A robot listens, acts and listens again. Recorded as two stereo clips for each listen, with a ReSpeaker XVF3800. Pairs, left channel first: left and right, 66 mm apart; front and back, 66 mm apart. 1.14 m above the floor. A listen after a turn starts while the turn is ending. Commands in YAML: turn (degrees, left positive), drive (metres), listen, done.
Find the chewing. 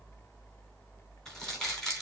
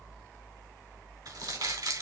listen: true
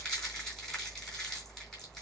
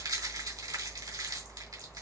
listen: true
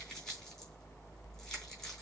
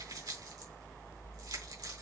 done: "I can't make out chewing to turn to."